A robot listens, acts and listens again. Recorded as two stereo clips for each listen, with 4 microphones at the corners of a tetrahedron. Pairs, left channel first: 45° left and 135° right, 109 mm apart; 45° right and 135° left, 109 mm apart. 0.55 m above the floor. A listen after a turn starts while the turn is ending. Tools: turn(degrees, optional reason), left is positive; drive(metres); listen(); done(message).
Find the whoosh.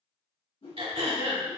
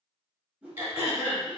turn(degrees=60, reason="The whoosh: 60° left.")
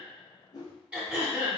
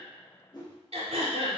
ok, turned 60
done("Facing the whoosh, 1 to 2 m away.")